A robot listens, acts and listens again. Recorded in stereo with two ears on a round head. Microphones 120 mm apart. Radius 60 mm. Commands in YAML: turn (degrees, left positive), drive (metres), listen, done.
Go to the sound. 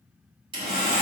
turn: -40
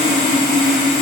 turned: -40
drive: 1.0
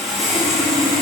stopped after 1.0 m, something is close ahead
done: "I am next to the sawing."